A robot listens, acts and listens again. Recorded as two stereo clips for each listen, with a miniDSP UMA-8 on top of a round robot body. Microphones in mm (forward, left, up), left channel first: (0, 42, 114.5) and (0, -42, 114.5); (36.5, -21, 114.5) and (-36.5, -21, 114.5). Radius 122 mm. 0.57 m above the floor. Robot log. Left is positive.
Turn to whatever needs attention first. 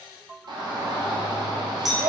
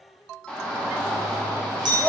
note: The shout: 75° right.
cmd yaw -75
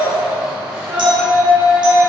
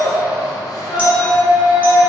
note: The shout is now 10° right.
cmd yaw -10
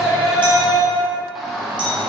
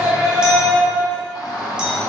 end: Found it: a shout, straight ahead.